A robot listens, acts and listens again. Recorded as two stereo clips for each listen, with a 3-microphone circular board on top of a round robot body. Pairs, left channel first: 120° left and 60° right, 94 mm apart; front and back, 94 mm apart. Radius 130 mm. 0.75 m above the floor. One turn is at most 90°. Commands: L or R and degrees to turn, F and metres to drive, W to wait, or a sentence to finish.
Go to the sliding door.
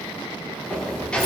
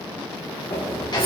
L45
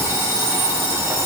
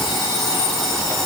W
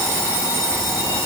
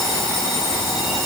W
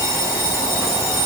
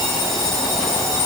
I heard a sliding door from this way, but can't make it out now. I did not reach it.